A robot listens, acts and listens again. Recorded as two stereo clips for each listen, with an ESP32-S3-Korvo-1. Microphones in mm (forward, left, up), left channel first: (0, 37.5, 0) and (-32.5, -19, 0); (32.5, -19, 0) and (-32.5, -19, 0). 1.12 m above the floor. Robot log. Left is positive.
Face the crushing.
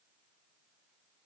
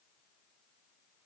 cmd idle
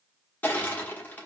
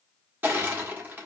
note: The crushing: 120° left.
cmd yaw +120
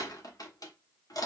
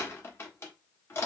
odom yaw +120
note: The crushing is now 50° left.
cmd yaw +50
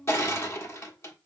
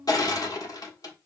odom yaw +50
note: The crushing is now 15° left.
cmd yaw +15
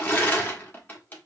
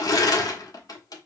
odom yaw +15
end: Facing the crushing, 1 to 2 m away.